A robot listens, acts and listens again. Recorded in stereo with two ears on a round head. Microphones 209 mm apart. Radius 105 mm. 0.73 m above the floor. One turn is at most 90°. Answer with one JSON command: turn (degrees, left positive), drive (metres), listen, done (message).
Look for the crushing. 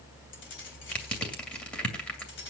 {"turn": 30}
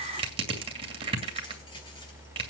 {"turn": -25}
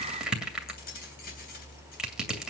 {"done": "Facing the crushing, 2 to 4 m away."}